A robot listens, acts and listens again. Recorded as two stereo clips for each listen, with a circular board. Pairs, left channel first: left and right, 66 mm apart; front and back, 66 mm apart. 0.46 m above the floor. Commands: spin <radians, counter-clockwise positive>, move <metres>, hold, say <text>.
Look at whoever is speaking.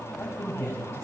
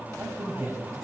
spin 2.36
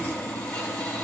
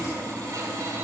hold
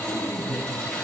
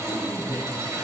spin 0.61
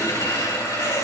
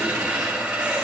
hold
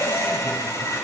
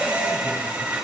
hold
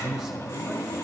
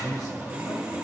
say Facing the man speaking, 2 to 4 m away.